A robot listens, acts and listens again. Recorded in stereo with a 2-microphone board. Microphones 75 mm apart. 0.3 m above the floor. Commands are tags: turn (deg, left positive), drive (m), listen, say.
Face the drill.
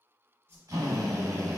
<turn deg="-50"/>
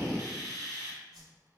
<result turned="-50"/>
<turn deg="-70"/>
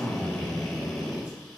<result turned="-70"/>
<say>Found it: a drill, straight ahead.</say>